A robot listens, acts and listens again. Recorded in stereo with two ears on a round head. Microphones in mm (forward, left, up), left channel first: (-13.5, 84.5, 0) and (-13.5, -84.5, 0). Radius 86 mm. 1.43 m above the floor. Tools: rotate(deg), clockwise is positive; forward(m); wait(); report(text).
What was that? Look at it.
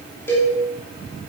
rotate(-30)
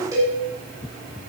rotate(20)
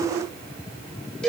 report("Found it: a cowbell, straight ahead.")